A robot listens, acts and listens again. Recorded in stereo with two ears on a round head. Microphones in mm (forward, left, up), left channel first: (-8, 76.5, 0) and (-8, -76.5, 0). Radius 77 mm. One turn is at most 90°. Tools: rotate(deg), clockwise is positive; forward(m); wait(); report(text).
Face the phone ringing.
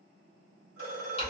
rotate(-90)
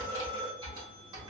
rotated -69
rotate(-10)
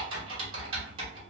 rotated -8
wait()
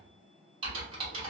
wait()
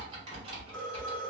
report("Found it: a phone ringing, straight ahead.")